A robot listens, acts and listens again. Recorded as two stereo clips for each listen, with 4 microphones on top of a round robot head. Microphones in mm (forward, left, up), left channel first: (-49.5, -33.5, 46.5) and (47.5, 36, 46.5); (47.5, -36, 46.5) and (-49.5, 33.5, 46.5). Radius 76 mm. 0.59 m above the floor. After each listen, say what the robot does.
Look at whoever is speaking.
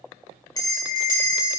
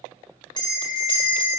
Keep listening.
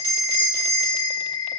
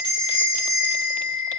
Keep listening.
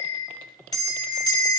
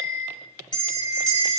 I can't make out anyone speaking, only a bell.